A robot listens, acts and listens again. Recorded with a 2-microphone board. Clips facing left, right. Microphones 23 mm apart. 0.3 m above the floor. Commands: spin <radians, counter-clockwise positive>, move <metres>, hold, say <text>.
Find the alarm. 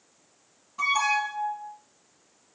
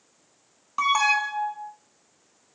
spin -1.22
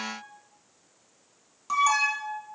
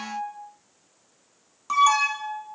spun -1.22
spin -0.26
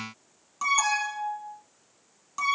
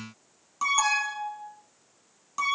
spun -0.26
say Found it: an alarm, straight ahead.